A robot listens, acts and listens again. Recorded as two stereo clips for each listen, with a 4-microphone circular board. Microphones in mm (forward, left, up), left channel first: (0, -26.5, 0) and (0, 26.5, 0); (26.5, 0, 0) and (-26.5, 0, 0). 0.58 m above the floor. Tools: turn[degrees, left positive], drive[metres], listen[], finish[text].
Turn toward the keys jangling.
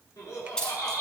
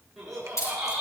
Thought: The keys jangling: 15° right.
Action: turn[-15]
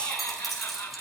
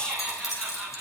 Action: finish[Found it: keys jangling, straight ahead, over 4 m away.]